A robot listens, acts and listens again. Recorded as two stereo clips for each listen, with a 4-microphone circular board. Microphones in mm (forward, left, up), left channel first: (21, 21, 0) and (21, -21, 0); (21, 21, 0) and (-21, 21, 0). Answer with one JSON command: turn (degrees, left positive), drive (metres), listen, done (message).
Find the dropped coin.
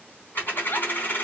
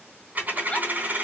{"turn": 130}
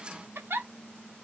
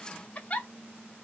{"done": "I heard a dropped coin from this way, but can't make it out now."}